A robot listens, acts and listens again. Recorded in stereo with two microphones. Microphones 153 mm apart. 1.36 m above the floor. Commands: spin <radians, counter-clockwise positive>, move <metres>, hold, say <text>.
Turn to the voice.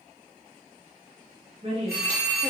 spin -0.70
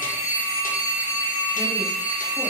hold
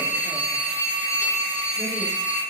hold
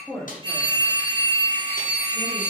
say Facing the woman speaking, 1 to 2 m away.